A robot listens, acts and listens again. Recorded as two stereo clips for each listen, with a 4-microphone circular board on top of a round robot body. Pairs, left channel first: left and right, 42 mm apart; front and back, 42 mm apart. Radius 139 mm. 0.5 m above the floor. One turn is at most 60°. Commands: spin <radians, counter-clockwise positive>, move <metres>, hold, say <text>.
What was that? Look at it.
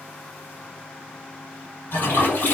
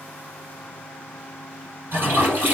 spin 1.05
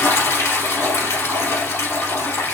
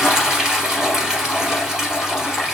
spin 1.05
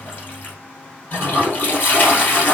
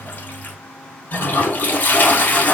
spin 0.87
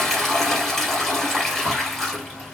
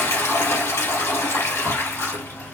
spin 0.17
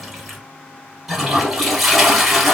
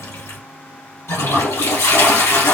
say Found it: a toilet flushing, straight ahead.